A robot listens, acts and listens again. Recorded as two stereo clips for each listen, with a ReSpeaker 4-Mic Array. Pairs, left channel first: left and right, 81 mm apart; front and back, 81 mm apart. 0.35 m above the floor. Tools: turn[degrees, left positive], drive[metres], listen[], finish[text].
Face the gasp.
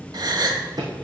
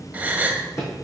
Thought: The gasp: 110° right.
Action: turn[-110]
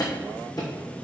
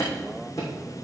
Action: finish[I heard a gasp from this way, but can't make it out now.]